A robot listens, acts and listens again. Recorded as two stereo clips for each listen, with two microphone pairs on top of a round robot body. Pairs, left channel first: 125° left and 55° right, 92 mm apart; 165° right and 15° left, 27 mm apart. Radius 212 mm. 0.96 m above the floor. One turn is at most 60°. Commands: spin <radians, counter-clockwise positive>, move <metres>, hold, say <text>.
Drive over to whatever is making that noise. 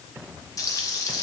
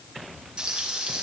spin 1.05
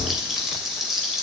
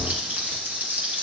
spin 0.52
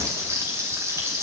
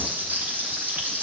move 1.0
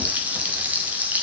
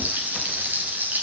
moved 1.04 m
spin 0.35
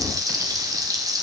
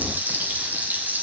move 1.0
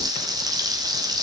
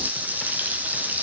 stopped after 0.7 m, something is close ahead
say Arrived at the frying, straight ahead.